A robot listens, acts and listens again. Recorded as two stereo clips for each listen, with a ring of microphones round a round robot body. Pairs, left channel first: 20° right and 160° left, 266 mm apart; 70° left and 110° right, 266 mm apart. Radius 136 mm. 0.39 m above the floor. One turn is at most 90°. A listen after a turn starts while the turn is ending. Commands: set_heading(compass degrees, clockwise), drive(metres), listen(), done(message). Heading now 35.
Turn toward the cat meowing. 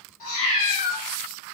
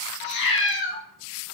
set_heading(15)
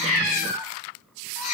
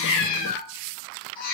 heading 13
set_heading(3)
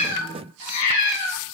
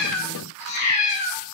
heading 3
done("Facing the cat meowing.")